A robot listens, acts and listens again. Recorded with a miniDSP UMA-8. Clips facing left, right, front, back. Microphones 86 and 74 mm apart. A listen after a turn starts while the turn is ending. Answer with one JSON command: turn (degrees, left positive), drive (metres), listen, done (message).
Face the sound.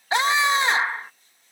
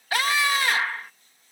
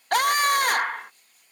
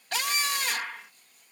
{"turn": 25}
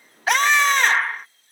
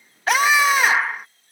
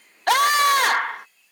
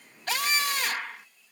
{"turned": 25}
{"done": "Found it: a scream, straight ahead."}